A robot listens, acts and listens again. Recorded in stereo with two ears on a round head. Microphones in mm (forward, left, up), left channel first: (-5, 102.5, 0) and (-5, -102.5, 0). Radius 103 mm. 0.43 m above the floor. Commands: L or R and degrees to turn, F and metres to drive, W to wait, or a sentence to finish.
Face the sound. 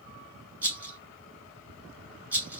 R30
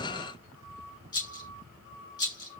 L20
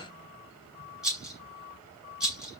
Facing the rattle.